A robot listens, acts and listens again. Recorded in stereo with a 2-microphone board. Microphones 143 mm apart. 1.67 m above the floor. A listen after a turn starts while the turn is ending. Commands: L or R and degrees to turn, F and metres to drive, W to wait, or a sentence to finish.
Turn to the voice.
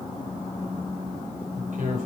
R70
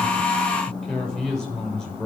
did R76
Found it: a man speaking, straight ahead, over 4 m away.